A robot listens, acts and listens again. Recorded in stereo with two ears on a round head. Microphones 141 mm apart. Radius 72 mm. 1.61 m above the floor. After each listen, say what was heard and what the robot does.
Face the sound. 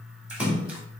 Turn 30° right.
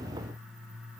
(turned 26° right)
Keep listening.
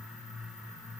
I heard a splash, but can't make it out now. It was about 20° left or 145° right.